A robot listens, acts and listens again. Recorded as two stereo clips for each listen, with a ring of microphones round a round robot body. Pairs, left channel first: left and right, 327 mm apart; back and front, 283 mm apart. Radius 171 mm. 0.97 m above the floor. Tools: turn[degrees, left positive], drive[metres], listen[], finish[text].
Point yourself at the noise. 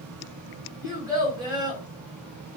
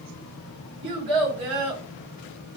Thought: The child speaking: 10° right.
Action: turn[-10]
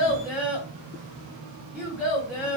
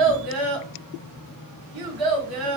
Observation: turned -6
Action: finish[Found it: a child speaking, straight ahead, 1 to 2 m away.]